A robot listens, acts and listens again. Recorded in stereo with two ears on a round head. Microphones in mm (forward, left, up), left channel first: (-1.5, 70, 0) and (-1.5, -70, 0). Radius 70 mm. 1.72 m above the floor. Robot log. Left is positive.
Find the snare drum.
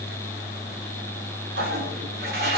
cmd idle
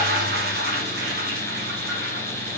cmd idle
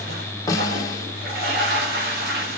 note: The snare drum: about 20° left or 160° left.
cmd yaw +20
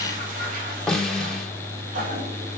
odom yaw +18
end: Facing the snare drum.